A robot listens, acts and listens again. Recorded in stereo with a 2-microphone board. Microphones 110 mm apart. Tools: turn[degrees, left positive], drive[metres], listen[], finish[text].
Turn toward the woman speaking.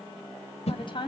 Thought: The woman speaking: about 45° left or 135° left.
Action: turn[45]
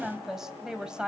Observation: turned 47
Thought: So it is at 10° right.
Action: turn[-10]
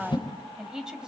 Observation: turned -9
Thought: The woman speaking is now 10° right.
Action: turn[-10]
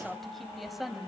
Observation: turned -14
Action: finish[Facing the woman speaking.]